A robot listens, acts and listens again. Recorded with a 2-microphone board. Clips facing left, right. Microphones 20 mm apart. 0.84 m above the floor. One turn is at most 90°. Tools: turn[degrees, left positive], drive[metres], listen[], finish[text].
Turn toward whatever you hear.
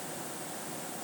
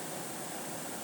Action: listen[]
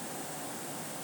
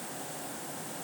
Action: listen[]
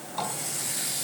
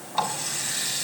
Thought: The running tap: about 35° right or 145° right.
Action: turn[-35]
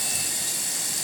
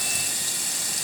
Action: finish[Found it: a running tap, straight ahead.]